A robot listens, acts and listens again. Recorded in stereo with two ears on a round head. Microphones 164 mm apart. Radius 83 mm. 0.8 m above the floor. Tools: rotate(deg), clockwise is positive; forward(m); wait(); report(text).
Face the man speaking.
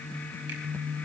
wait()
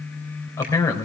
rotate(-20)
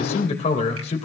rotate(-145)
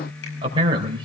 rotate(30)
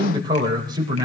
rotate(25)
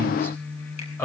rotate(-10)
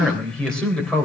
report("Facing the man speaking, 2 to 4 m away.")